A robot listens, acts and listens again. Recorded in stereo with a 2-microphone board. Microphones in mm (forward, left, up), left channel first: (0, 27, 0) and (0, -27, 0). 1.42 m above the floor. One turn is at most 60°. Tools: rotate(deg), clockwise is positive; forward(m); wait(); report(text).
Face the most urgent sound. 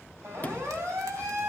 rotate(55)
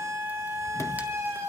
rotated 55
rotate(60)
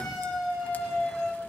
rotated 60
report("Facing the siren.")